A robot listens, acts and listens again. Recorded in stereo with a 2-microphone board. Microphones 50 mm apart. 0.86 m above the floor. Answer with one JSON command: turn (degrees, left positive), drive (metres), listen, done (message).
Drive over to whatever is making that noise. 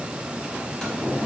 {"turn": 20}
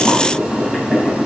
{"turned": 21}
{"drive": 1.0}
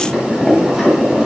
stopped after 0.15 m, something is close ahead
{"done": "Something is in my way. I am facing the boiling but have not reached it."}